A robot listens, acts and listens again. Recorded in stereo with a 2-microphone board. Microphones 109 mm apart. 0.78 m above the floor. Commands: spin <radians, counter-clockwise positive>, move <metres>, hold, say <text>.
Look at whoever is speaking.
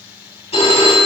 hold
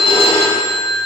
hold
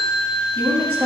spin -1.05
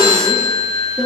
spin -0.17
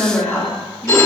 say Facing the woman speaking.